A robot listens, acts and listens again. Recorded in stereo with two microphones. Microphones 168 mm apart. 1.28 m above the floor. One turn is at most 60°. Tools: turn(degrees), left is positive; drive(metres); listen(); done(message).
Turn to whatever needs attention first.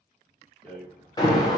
turn(degrees=25)
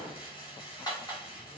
listen()
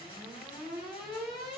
done("Found it: an alarm, straight ahead, 1 to 2 m away.")